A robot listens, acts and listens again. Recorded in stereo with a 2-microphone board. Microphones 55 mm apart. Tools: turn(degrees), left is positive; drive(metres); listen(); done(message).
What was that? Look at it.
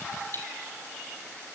turn(degrees=45)
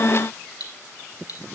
turn(degrees=90)
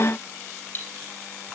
turn(degrees=35)
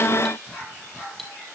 done("Found it: cutlery clinking, straight ahead.")